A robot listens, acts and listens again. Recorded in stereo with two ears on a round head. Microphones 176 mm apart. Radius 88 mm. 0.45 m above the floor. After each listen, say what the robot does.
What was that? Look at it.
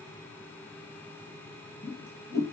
Turn 30° left.
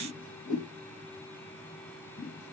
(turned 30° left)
Turn 135° left.
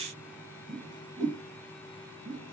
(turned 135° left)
Turn 25° right.
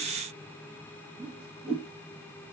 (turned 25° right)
Facing the whoosh.